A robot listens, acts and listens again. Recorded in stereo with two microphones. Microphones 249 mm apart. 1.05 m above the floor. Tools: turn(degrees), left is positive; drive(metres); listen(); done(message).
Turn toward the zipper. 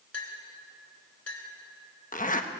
turn(degrees=30)
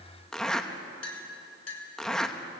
done("Facing the zipper.")